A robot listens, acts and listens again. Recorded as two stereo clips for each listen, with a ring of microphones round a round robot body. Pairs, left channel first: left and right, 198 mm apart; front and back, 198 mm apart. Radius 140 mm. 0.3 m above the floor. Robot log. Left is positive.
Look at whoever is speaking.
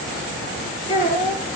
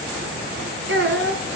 note: The child speaking: 155° left.
cmd yaw +155
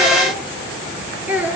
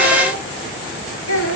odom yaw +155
note: The child speaking is now 10° right.
cmd yaw -10
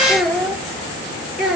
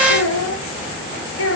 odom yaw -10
end: Found it: a child speaking, straight ahead, over 4 m away.